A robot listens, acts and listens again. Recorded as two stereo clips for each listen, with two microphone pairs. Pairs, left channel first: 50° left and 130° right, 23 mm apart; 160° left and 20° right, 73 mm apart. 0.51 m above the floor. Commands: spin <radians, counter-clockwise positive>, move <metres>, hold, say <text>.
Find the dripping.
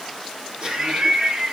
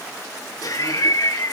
hold
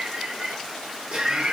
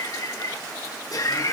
hold
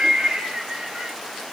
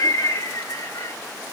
say I can't make out dripping to turn to.